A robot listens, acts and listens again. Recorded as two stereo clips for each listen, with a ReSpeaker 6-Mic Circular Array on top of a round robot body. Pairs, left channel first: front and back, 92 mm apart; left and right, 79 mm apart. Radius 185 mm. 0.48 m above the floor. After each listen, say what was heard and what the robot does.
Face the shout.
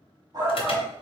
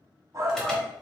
The shout: 140° right. Turn 140° right.
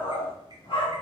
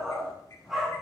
Found it: a shout, straight ahead.